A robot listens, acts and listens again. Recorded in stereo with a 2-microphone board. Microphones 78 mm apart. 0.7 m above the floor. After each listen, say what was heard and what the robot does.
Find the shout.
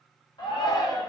The shout: about 75° left or 105° left. Turn 75° left.
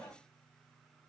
Keep listening.
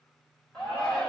So it is at 15° left. Turn 15° left.
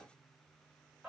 Found it: a shout, straight ahead, 1 to 2 m away.